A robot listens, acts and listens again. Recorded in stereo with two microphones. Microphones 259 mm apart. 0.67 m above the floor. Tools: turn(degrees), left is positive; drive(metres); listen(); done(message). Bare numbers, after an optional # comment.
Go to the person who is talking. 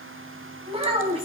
# The child speaking: about 20° right or 160° right.
turn(-20)
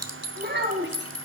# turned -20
# So it is at 135° right.
turn(-135)
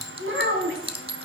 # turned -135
# The child speaking is now 50° right.
turn(-50)
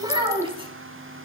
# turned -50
# The child speaking is now 20° right.
turn(-20)
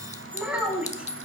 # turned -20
drive(1.0)
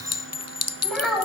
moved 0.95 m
drive(1.0)
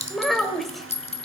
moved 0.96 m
drive(1.0)
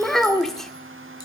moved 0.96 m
drive(1.0)
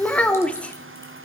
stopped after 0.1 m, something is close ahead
done("Arrived at the child speaking, straight ahead.")